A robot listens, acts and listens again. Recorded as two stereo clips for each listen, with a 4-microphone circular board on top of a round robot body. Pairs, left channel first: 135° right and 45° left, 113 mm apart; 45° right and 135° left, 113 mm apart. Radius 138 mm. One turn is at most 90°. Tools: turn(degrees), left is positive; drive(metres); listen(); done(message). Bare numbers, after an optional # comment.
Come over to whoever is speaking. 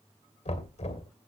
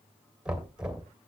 listen()
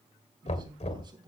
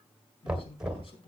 drive(1.0)
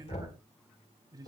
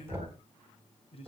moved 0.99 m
# The man speaking is now 10° right.
turn(-10)
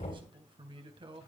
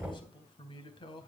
drive(1.0)
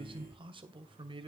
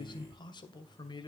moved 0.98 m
drive(1.0)
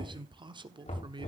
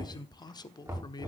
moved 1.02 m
drive(1.0)
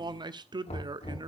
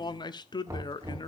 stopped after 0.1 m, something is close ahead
done("Arrived at the man speaking, straight ahead.")